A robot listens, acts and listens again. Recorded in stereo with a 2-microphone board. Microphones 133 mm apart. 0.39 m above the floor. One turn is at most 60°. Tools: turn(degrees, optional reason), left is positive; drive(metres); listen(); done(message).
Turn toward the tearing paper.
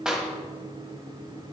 listen()
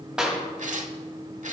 turn(degrees=-60, reason="The tearing paper: about 65° right or 115° right.")
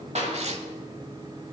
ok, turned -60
turn(degrees=-55, reason="So it is at 55° right.")
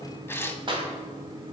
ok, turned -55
turn(degrees=15, reason="The tearing paper is now 15° left.")
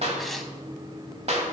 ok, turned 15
listen()
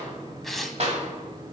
done("Found it: tearing paper, straight ahead, under 1 m away.")